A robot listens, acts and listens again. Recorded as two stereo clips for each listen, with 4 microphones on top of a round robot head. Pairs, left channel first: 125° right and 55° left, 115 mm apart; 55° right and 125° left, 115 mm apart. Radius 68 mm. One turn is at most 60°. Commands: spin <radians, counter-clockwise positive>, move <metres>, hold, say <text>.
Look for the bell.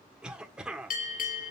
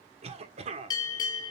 spin -1.05
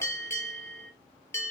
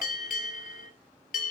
spin -0.96
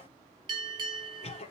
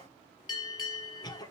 say Facing the bell, 2 to 4 m away.